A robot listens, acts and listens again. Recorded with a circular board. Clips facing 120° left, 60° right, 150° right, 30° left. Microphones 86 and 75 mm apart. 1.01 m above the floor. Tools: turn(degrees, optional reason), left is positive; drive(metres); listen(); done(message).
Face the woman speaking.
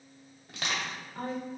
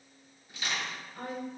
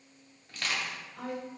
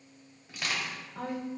turn(degrees=65, reason="The woman speaking: 65° left.")
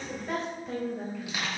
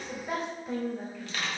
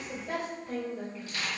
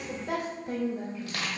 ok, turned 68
turn(degrees=35, reason="The woman speaking is now 35° left.")
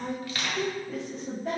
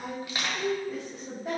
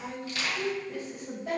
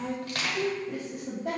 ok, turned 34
turn(degrees=30, reason="The woman speaking is now 30° left.")
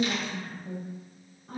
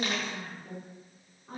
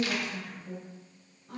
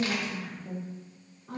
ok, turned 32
turn(degrees=10, reason="The woman speaking is now 10° left.")
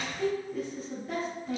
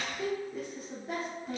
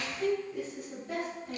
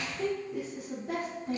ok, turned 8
done("Found it: a woman speaking, straight ahead.")